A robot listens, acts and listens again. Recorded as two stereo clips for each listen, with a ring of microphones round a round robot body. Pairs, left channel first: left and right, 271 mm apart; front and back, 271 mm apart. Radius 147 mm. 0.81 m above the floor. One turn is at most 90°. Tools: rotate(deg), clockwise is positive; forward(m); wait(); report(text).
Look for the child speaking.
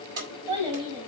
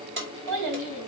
rotate(90)
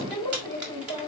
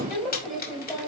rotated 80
rotate(90)
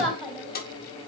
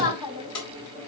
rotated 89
report("Found it: a child speaking, straight ahead, over 4 m away.")